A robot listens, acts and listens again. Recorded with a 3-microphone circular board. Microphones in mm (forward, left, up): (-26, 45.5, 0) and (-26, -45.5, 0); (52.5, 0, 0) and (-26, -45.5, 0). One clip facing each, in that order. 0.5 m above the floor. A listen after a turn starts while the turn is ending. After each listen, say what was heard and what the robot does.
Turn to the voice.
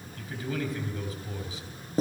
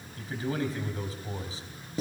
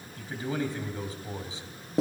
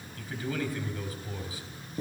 The man speaking: 35° right. Turn 35° right.
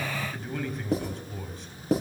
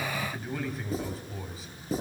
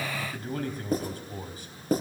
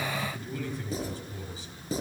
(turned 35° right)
Found it: a man speaking, straight ahead, 2 to 4 m away.